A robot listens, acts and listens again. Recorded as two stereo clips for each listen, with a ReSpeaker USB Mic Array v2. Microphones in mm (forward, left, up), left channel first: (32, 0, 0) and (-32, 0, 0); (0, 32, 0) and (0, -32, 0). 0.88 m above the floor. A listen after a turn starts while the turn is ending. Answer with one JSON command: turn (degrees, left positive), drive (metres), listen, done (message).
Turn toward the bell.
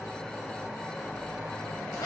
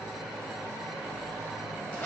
{"listen": true}
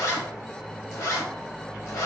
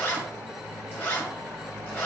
{"listen": true}
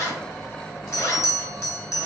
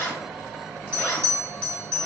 {"turn": -40}
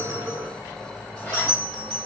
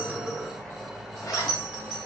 {"done": "Found it: a bell, straight ahead."}